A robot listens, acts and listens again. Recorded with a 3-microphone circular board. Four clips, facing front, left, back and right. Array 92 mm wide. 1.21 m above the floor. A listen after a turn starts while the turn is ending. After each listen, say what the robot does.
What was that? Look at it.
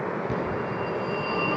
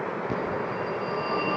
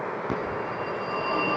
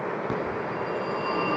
Turn 140° right.
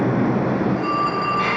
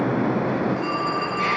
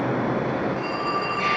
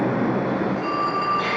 Found it: a phone ringing, straight ahead.